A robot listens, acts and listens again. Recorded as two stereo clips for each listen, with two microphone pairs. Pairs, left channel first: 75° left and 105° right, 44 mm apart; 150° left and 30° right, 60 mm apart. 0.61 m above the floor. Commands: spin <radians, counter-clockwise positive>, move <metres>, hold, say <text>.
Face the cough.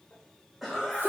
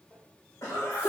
spin 2.97
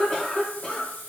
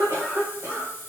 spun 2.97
spin 0.17
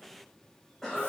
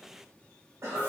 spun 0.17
say Facing the cough.